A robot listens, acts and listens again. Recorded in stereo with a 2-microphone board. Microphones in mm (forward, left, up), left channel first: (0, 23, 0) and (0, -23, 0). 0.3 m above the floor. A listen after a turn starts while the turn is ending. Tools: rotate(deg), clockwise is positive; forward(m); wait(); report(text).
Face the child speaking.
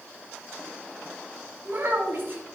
rotate(50)
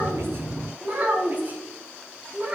rotate(35)
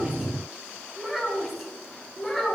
report("Found it: a child speaking, straight ahead, 2 to 4 m away.")